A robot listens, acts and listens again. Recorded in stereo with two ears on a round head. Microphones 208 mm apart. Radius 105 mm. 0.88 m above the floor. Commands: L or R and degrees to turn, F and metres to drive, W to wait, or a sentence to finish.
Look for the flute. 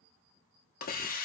W
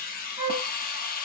R20
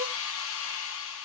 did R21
W
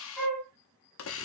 Facing the flute, 1 to 2 m away.